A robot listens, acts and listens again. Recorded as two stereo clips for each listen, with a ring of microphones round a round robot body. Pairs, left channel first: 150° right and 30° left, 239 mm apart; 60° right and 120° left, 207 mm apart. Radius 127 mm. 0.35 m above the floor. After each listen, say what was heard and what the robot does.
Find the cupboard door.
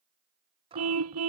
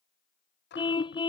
The cupboard door: 35° right. Turn 35° right.
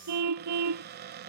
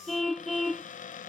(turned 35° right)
The cupboard door is now 10° right. Turn 10° right.
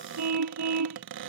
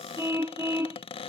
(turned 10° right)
Facing the cupboard door.